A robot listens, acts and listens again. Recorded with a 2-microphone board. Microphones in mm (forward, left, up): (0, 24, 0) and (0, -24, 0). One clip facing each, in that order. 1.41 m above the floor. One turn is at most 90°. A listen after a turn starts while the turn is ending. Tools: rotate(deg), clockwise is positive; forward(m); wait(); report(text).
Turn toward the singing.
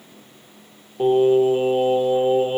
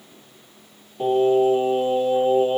rotate(-25)
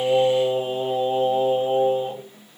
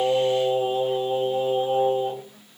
rotate(-90)
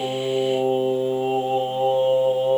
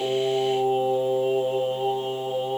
rotate(-70)
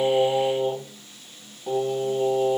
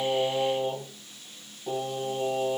rotate(-15)
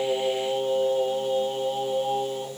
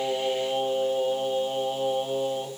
report("Facing the singing.")